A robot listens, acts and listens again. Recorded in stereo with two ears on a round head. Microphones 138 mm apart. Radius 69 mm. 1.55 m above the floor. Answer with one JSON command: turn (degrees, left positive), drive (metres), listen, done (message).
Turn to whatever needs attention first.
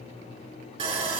{"listen": true}
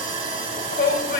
{"turn": 65}
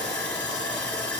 {"listen": true}
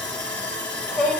{"done": "Facing the shout, 1 to 2 m away."}